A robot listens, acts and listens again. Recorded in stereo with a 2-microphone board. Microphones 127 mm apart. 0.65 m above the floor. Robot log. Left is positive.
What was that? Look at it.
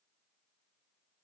cmd idle
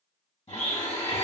note: The blender: about 50° left or 130° left.
cmd yaw +50
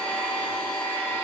note: So it is at 10° left.
cmd yaw +10
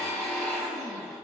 end: Found it: a blender, straight ahead.